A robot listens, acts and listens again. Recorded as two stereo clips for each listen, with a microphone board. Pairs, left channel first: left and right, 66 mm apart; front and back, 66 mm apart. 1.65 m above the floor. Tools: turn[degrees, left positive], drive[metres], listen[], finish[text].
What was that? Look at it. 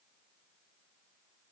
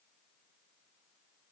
Action: listen[]
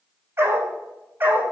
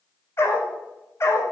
Thought: The dog barking: 35° right.
Action: turn[-35]
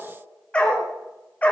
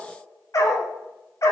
Thought: The dog barking is now 30° left.
Action: turn[30]
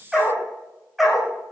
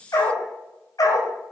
Action: finish[Found it: a dog barking, straight ahead, 2 to 4 m away.]